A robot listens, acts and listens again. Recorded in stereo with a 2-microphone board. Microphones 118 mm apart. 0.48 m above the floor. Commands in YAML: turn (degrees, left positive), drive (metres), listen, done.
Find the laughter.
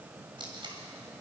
listen: true
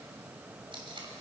listen: true
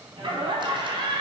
turn: -45
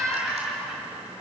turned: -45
done: "Found it: laughter, straight ahead."